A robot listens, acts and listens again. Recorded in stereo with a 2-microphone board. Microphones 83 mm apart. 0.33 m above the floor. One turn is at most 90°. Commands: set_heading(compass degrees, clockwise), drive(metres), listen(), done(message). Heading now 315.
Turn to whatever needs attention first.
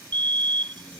set_heading(25)
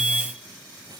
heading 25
set_heading(35)
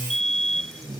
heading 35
done("Found it: a fire alarm, straight ahead.")